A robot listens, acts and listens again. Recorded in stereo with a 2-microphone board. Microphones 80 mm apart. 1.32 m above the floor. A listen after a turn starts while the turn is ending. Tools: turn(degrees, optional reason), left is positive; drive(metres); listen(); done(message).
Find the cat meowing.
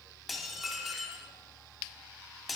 listen()
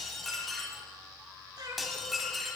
turn(degrees=-55, reason="The cat meowing: about 55° right or 125° right.")
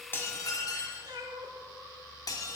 turn(degrees=-70, reason="So it is at 70° right.")
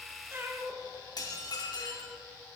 turn(degrees=-25, reason="The cat meowing is now 25° right.")
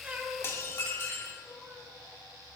listen()
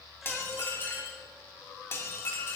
listen()
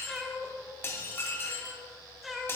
done("Found it: a cat meowing, straight ahead, 2 to 4 m away.")